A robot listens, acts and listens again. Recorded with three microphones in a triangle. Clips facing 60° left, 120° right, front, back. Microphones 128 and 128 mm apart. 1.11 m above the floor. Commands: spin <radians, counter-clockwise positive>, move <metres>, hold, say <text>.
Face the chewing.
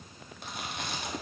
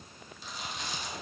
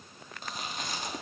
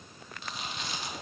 spin 0.79
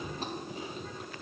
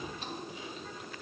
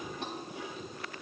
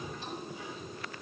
spin 0.26
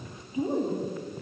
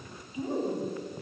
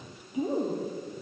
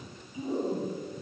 say Facing the chewing.